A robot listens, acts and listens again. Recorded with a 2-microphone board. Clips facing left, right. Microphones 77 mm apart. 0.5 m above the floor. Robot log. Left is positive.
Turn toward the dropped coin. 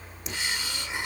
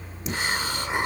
cmd yaw +30
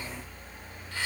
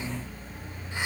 cmd idle
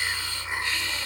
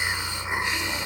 end: I heard a dropped coin, but can't make it out now. It was about 30° right or 150° left.